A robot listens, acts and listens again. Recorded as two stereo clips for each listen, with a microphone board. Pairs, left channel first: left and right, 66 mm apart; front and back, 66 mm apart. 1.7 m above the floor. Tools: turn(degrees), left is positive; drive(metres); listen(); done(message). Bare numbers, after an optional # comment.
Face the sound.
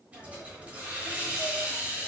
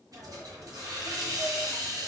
# The hiss: 155° right.
turn(-155)
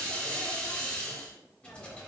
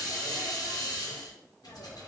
# The hiss is now 20° left.
turn(20)
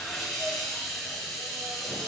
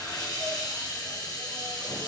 done("Facing the hiss, under 1 m away.")